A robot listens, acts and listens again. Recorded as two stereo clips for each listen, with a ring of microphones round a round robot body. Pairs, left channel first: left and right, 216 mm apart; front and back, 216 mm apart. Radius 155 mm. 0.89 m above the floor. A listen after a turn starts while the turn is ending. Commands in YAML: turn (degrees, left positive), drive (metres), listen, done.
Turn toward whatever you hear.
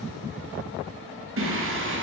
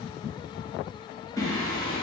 turn: -70
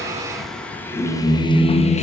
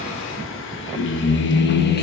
turn: 35
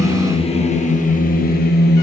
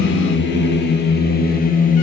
turn: 50
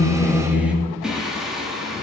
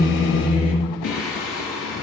done: "Found it: singing, straight ahead, 1 to 2 m away."